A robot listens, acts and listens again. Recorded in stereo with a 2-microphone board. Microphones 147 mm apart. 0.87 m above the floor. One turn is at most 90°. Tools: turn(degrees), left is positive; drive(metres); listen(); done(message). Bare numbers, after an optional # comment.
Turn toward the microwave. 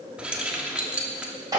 listen()
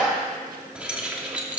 listen()
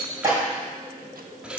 done("I can't make out a microwave to turn to.")